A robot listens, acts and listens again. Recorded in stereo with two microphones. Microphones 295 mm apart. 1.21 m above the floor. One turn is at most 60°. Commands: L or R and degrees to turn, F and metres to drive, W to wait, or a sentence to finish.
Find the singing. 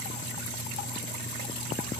W
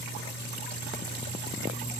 W
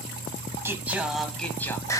L30
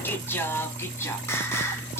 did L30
L30
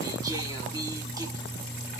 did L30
W
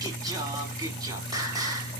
R10
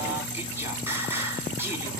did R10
R10
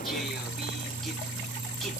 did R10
W
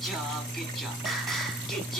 W
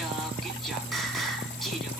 Facing where the singing came from. I can't hear it now.